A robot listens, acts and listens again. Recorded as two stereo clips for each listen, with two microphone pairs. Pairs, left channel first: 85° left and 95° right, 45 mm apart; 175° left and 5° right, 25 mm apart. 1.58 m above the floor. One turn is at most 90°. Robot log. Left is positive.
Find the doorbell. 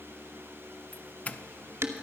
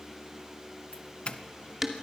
note: The doorbell: 135° left.
cmd yaw +90
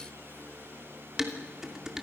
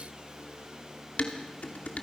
note: Nothing new. It was at 45° left.
cmd yaw +45
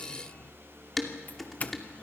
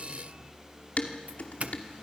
note: The doorbell is now 20° left.
cmd yaw +20
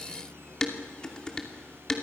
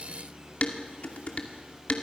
cmd idle
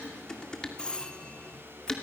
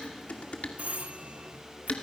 note: The doorbell is now 10° left.
cmd yaw +10
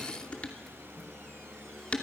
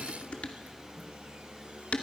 cmd idle
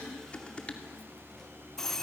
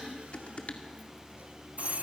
end: Facing the doorbell, 1 to 2 m away.